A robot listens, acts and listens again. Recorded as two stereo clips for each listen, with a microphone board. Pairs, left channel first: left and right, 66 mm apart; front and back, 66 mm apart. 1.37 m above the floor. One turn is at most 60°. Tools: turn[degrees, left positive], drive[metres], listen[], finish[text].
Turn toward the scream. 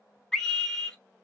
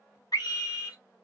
Thought: The scream: 10° left.
Action: turn[10]
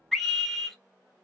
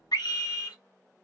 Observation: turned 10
Action: finish[Found it: a scream, straight ahead.]